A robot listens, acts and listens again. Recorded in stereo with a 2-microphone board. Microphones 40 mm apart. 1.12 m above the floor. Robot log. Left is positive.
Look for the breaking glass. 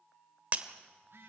note: The breaking glass: about 40° right or 140° right.
cmd yaw -40
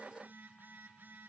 cmd idle
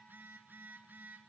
end: I heard breaking glass, but can't make it out now. It was about straight ahead or 100° right.